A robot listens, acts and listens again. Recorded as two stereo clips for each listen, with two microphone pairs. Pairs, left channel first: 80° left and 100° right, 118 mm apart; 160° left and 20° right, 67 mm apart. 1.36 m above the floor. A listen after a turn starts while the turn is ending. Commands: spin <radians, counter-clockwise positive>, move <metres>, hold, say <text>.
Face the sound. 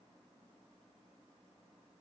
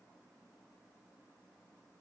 hold
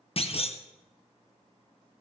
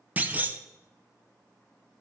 spin 0.79
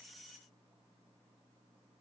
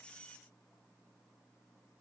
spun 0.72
say I heard a clunk from this way, but can't make it out now.